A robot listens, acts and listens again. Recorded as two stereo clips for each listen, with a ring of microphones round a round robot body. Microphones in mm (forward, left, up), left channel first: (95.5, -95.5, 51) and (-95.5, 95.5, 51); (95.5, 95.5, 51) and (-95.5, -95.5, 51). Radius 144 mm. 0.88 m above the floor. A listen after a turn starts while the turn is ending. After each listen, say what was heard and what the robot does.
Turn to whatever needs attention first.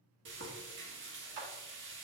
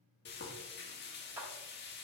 Keep listening.
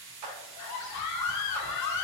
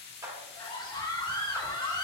The scream: 30° right. Turn 30° right.
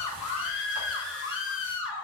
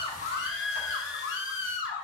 Facing the scream, 1 to 2 m away.